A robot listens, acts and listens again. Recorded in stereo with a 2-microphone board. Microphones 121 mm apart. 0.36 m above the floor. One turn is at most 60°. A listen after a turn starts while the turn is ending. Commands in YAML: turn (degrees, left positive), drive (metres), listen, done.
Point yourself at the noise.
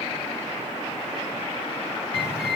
turn: -50
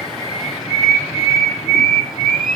done: "Facing the bird, 1 to 2 m away."